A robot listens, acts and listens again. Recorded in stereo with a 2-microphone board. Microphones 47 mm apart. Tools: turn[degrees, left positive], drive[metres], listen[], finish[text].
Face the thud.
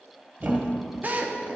Thought: The thud: about 40° right or 140° right.
Action: turn[-40]
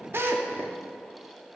Action: listen[]
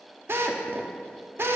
Action: finish[I heard a thud, but can't make it out now. It was about straight ahead or 100° right.]